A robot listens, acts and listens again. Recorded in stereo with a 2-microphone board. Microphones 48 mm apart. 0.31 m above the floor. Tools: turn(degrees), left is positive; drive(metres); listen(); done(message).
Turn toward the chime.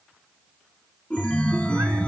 turn(degrees=25)
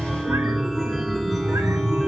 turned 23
done("Facing the chime, 1 to 2 m away.")